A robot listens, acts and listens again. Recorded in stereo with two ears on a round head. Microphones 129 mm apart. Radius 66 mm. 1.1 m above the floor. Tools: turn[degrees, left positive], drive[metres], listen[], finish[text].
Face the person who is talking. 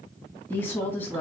Action: turn[30]
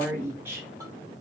Thought: So it is at 20° right.
Action: turn[-20]
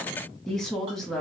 Action: finish[Found it: a woman speaking, straight ahead.]